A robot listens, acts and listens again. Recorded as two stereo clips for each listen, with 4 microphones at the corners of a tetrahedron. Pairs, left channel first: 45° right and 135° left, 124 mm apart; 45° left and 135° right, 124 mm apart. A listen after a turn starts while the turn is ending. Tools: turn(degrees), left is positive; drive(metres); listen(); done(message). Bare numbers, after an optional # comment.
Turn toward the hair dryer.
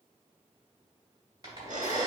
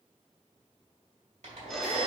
# The hair dryer: 165° right.
turn(-165)
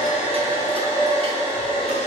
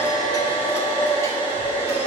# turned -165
done("Facing the hair dryer, 2 to 4 m away.")